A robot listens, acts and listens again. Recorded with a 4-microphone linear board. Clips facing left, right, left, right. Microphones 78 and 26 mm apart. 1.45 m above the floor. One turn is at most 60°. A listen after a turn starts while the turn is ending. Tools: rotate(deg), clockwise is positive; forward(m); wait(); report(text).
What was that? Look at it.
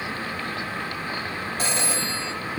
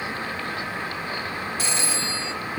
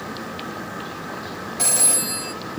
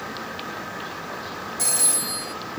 rotate(-40)
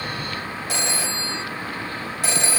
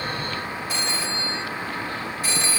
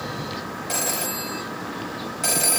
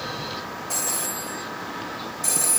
rotate(-60)
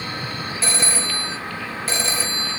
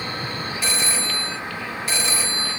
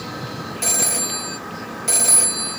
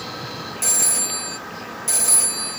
rotate(-35)
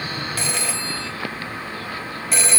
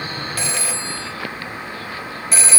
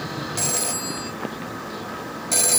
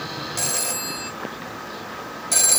report("Facing the phone ringing, 1 to 2 m away.")